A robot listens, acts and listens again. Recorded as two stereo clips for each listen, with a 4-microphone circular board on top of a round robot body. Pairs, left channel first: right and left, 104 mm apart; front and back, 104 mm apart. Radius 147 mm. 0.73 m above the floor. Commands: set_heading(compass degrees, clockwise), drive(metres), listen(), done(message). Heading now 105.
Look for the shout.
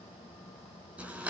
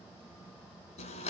listen()
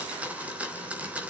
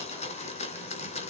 listen()
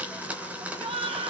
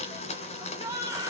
set_heading(345)
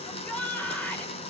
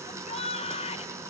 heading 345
set_heading(355)
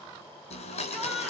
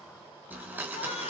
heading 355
listen()
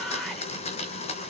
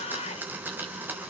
done("Found it: a shout, straight ahead.")